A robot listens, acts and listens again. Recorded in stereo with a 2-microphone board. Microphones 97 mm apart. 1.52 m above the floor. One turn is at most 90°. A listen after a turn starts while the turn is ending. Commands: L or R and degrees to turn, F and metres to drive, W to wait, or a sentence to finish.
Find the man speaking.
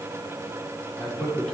L30
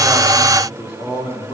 L90
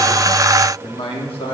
L80
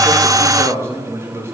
R25
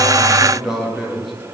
Found it: a man speaking, straight ahead.